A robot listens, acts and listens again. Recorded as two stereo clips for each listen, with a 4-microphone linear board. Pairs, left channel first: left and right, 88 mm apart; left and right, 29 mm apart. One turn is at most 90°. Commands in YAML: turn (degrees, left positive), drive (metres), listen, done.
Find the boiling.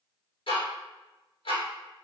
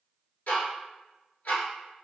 listen: true
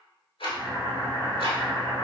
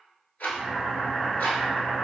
turn: 35
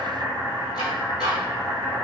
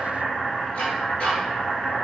turn: 90
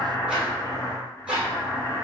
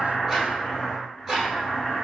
turn: 40
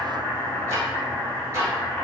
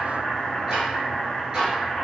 turn: 20
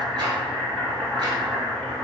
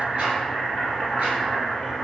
done: "Facing the boiling, 1 to 2 m away."